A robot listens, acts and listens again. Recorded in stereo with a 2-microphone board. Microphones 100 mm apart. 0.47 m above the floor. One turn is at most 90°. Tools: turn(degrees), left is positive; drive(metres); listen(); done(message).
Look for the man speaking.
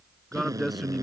turn(degrees=30)
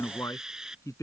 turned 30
turn(degrees=90)
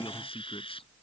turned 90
turn(degrees=65)
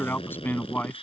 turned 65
turn(degrees=20)
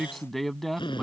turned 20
done("Facing the man speaking.")